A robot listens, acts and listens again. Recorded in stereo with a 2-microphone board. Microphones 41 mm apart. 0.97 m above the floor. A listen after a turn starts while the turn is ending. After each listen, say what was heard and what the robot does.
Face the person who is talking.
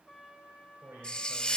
The man speaking: about 70° right or 110° right. Turn 70° right.
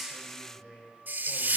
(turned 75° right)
Facing the man speaking.